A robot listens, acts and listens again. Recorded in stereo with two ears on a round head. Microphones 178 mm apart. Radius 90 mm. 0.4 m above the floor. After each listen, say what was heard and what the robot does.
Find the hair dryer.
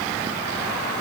Keep listening.
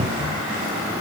Keep listening.
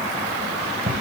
I can't make out a hair dryer, only a cupboard door.